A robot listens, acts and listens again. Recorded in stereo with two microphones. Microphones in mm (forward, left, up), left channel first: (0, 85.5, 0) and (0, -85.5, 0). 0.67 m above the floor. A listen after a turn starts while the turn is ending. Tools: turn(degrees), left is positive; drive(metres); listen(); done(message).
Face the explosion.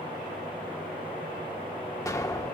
turn(degrees=20)
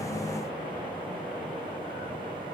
listen()
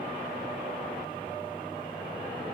done("I heard an explosion, but can't make it out now. It was about straight ahead or 140° left.")